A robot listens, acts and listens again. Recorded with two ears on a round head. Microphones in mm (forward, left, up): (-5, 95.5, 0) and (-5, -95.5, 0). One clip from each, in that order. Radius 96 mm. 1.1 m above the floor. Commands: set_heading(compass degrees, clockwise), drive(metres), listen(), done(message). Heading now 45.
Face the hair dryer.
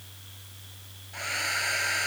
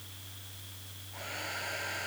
set_heading(350)
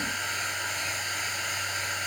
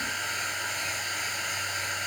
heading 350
done("Facing the hair dryer.")